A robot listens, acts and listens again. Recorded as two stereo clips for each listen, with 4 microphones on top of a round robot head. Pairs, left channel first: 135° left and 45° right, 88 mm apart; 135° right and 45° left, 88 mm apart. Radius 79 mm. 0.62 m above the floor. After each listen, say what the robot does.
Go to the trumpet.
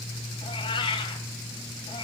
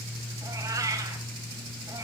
Keep listening.
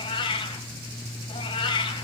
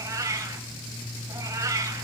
Keep listening.
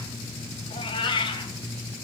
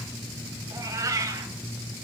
I can't make out a trumpet to turn to.